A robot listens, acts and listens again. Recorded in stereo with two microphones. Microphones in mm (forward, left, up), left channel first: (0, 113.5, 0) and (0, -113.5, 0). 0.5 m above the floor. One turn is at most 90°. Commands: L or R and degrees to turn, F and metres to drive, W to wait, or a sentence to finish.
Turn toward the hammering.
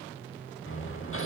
L70
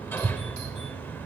L10
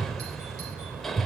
Found it: hammering, straight ahead.